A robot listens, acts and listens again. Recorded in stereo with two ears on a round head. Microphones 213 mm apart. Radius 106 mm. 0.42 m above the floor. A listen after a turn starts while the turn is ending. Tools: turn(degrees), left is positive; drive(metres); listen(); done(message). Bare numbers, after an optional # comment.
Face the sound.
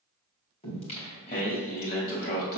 # The singing: about 40° left or 140° left.
turn(40)
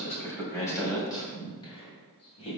# So it is at 25° left.
turn(25)
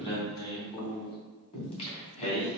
# The singing is now 30° left.
turn(30)
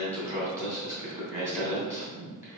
# The singing is now 10° right.
turn(-10)
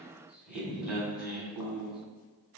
done("Facing the singing, 2 to 4 m away.")